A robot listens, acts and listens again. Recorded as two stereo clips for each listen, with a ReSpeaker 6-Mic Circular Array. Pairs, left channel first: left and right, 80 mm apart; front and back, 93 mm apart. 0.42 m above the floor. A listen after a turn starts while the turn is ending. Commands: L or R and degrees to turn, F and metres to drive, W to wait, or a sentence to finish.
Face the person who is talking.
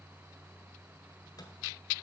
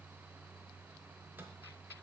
W
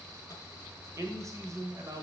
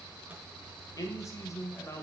R60
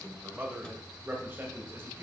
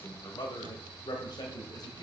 R40
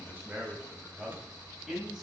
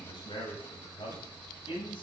R10
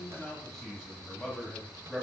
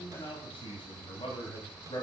Facing the man speaking, 2 to 4 m away.